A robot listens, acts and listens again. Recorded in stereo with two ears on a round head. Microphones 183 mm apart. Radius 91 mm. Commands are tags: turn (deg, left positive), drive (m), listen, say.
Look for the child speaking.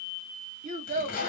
<turn deg="-40"/>
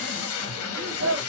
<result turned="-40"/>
<turn deg="-90"/>
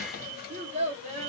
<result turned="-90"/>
<turn deg="-40"/>
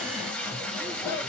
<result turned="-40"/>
<listen/>
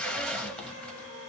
<listen/>
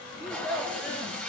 <say>Facing the child speaking, 1 to 2 m away.</say>